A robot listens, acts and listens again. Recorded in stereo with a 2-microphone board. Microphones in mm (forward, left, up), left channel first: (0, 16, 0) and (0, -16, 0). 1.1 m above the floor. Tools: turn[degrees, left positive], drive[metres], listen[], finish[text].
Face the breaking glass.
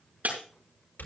Thought: The breaking glass: about 60° right or 120° right.
Action: turn[-60]
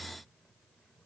Action: listen[]
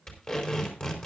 Action: finish[I heard breaking glass, but can't make it out now. It was about straight ahead or 60° right.]